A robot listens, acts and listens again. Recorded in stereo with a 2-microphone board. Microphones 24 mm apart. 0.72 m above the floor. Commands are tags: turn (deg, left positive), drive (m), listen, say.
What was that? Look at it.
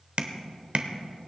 <turn deg="-60"/>
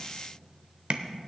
<turn deg="-55"/>
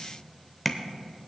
<say>Found it: tapping, straight ahead.</say>